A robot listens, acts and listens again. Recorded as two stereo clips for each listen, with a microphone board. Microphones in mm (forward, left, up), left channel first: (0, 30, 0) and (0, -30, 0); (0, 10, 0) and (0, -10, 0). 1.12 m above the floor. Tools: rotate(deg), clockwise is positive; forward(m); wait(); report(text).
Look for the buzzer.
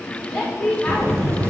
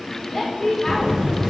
rotate(45)
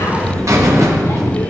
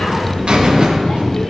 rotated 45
rotate(85)
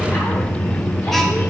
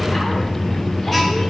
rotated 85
report("Facing the buzzer.")